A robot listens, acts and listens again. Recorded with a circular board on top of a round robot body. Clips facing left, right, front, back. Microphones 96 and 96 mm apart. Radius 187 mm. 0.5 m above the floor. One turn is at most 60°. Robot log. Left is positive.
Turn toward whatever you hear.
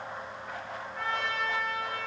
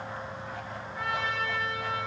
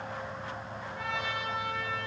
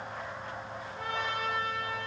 end: Found it: a trumpet, straight ahead, over 4 m away.